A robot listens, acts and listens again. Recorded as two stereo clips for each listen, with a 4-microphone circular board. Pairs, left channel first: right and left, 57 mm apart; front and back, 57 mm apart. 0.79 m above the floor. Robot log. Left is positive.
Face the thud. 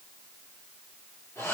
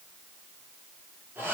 cmd idle
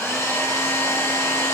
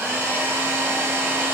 cmd idle
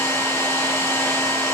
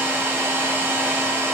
end: I can't make out a thud, only a hair dryer.